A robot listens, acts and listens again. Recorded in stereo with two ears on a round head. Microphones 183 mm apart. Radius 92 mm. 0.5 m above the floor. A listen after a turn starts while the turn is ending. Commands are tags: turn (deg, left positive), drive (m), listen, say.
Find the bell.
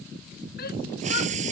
<listen/>
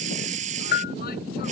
<turn deg="50"/>
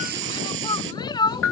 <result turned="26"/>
<turn deg="100"/>
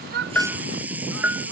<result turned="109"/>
<turn deg="-10"/>
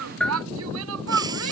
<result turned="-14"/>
<say>Facing the bell.</say>